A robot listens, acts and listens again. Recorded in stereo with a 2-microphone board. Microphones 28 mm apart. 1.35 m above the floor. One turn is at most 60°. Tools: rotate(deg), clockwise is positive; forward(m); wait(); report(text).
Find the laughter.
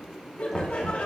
rotate(-60)
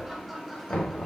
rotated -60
rotate(-10)
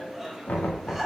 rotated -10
report("Facing the laughter.")